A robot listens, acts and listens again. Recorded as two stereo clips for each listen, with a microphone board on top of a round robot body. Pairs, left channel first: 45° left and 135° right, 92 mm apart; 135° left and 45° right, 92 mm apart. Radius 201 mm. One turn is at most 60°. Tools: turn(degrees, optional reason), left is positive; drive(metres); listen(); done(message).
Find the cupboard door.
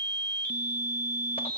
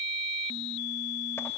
listen()
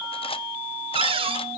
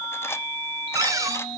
turn(degrees=-60, reason="The cupboard door: 105° right.")
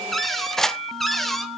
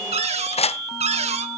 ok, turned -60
turn(degrees=-45, reason="The cupboard door is now 45° right.")
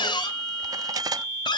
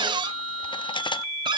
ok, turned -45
done("Facing the cupboard door, 1 to 2 m away.")